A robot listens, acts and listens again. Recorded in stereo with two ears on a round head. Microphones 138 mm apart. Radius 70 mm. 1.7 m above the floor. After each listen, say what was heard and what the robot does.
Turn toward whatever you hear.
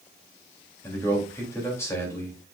The man speaking: about 20° left or 160° left. Turn 20° left.
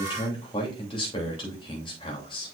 So it is at 145° left. Turn 145° left.
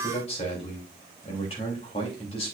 The man speaking is now 35° left. Turn 35° left.
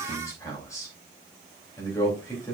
The man speaking is now 20° left. Turn 20° left.
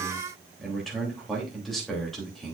Facing the man speaking.